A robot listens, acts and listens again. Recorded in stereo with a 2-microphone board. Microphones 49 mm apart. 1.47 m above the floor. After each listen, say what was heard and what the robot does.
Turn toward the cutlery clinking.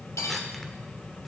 Turn 90° left.
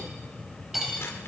Facing the cutlery clinking, over 4 m away.